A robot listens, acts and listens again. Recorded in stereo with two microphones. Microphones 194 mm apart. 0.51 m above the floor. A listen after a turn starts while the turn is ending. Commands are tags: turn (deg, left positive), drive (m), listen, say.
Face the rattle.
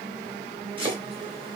<listen/>
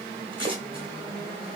<listen/>
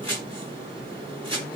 <say>I can't make out a rattle, only chopping.</say>